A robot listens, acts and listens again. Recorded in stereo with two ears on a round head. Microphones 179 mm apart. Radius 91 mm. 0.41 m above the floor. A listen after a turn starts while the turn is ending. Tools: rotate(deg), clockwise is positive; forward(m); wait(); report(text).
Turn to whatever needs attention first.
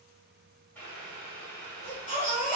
rotate(-40)
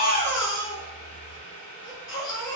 rotate(-100)
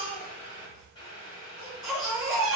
report("Facing the baby crying, 1 to 2 m away.")